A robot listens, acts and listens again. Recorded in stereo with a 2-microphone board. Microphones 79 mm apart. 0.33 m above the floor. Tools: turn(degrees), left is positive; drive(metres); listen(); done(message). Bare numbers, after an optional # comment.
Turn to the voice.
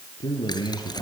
# The man speaking: about 70° left or 110° left.
turn(70)
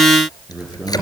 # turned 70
done("Facing the man speaking.")